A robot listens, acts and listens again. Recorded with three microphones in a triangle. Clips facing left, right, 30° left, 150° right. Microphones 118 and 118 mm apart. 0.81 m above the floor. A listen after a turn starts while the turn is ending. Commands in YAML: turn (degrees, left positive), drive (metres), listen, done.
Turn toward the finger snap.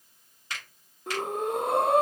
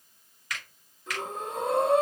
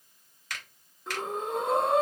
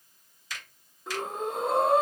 turn: 35
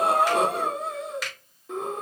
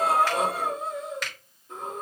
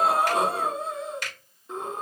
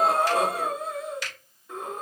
done: "Facing the finger snap, 1 to 2 m away."